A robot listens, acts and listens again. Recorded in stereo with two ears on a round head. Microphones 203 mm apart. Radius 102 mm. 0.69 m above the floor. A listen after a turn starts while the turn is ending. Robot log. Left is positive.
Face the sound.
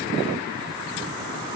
cmd idle
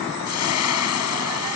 cmd yaw +90
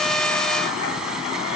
cmd idle
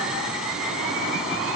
cmd idle
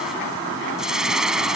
end: Found it: frying, straight ahead.